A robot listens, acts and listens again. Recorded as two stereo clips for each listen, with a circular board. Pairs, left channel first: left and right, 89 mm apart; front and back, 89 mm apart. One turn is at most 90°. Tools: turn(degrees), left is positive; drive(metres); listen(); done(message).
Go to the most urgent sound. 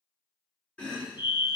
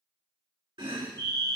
turn(degrees=-90)
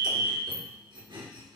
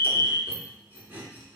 turn(degrees=-80)
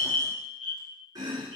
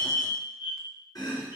turn(degrees=-15)
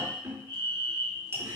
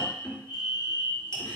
drive(metres=1.0)
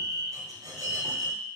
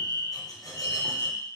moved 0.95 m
drive(metres=1.0)
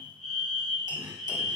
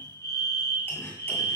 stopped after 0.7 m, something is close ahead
done("Arrived at the fire alarm, straight ahead.")